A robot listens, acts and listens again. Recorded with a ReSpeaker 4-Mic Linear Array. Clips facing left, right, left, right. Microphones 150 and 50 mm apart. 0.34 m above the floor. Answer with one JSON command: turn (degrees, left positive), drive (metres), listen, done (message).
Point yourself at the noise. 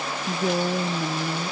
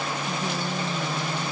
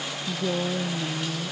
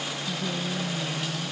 {"turn": 60}
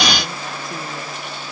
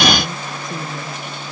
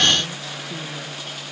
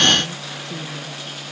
{"listen": true}
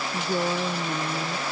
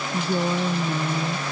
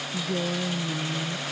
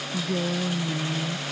{"done": "Found it: a woman speaking, straight ahead."}